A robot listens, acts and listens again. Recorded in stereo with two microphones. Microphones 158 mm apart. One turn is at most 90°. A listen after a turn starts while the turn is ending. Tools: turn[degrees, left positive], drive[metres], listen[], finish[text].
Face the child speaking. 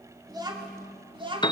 Thought: The child speaking: about 35° right or 145° right.
Action: turn[-35]
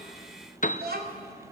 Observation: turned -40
Thought: So it is at 95° right.
Action: turn[-90]
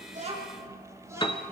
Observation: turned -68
Thought: The child speaking is now 15° right.
Action: turn[-15]
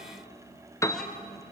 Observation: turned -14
Action: listen[]
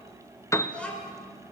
Action: finish[Found it: a child speaking, straight ahead, over 4 m away.]